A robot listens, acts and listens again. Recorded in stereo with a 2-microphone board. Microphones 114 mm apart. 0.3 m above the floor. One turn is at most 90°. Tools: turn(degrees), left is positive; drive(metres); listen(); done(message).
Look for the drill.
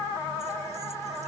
listen()
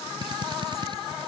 turn(degrees=-40)
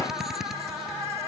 done("Facing the drill.")